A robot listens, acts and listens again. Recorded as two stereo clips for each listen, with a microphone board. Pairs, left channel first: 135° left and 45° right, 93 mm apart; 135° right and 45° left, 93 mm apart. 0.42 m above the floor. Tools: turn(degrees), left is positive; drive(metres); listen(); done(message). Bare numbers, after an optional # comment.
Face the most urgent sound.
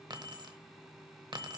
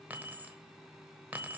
listen()
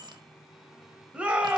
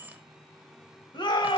# The shout: 120° right.
turn(-120)
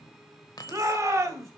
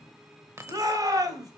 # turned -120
done("Found it: a shout, straight ahead, 1 to 2 m away.")